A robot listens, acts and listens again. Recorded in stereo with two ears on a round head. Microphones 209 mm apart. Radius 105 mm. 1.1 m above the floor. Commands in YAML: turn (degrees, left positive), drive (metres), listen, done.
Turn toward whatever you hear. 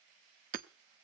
turn: -40
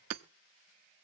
turn: -95
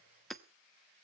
done: "Facing the hammering."